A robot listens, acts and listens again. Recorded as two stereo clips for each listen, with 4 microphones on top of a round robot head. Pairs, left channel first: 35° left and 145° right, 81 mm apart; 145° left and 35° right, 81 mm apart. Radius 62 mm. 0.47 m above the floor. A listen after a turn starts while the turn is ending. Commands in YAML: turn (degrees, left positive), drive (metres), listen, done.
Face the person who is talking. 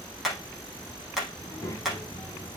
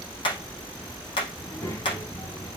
turn: 90
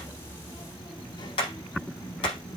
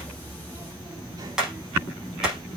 turn: 10
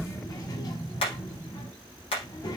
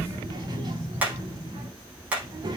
done: "Found it: a child speaking, straight ahead."